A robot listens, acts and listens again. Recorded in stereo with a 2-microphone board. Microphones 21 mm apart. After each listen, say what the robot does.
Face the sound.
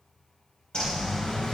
Turn 50° left.
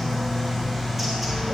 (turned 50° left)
Facing the bird.